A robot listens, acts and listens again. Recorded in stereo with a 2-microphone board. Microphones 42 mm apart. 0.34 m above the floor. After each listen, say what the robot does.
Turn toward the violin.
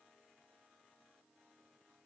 Keep listening.
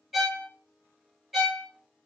Turn 30° right.
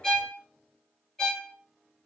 Turn 20° left.
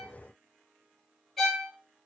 Found it: a violin, straight ahead, under 1 m away.